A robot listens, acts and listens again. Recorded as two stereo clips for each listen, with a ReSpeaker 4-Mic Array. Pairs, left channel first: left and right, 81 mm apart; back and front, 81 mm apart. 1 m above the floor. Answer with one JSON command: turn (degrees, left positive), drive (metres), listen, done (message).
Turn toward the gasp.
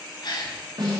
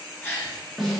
{"turn": 115}
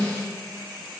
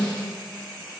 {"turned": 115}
{"done": "I heard a gasp from this way, but can't make it out now."}